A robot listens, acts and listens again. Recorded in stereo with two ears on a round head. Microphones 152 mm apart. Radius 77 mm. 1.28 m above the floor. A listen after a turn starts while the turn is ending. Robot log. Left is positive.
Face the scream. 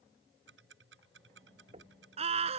note: The scream: about 40° right or 140° right.
cmd yaw -40
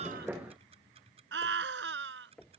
note: So it is at 100° right.
cmd yaw -100
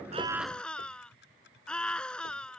end: Found it: a scream, straight ahead.